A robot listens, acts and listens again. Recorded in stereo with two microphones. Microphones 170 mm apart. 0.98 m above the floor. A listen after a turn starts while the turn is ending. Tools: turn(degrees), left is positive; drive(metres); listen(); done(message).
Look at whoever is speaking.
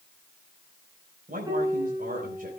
turn(degrees=-55)
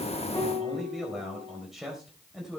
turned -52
done("Found it: a man speaking, straight ahead, 2 to 4 m away.")